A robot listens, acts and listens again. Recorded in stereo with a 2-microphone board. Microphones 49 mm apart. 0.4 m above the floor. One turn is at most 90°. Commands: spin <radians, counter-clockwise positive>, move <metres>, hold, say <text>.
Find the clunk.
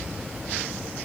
hold
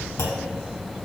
spin 1.22
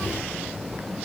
hold
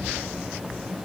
say I heard a clunk, but can't make it out now. It was about straight ahead or 40° left.